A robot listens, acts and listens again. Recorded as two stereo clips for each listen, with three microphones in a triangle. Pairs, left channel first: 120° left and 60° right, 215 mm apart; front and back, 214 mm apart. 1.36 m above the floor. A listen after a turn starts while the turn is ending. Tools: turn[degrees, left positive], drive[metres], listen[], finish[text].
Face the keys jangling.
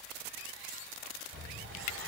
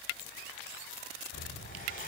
Thought: The keys jangling: 25° right.
Action: turn[-25]
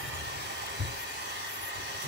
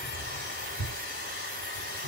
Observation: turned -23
Thought: The keys jangling is now 10° right.
Action: turn[-10]
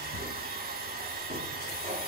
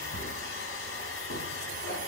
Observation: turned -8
Thought: The keys jangling is now 10° right.
Action: turn[-10]
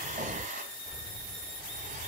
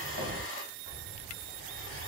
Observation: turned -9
Action: finish[Found it: keys jangling, straight ahead, over 4 m away.]